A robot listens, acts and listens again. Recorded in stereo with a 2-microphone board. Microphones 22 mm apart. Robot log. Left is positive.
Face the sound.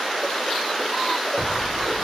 cmd yaw +30
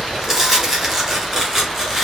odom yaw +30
note: So it is at 20° right.
cmd yaw -20
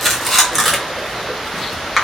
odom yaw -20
end: Facing the tearing paper.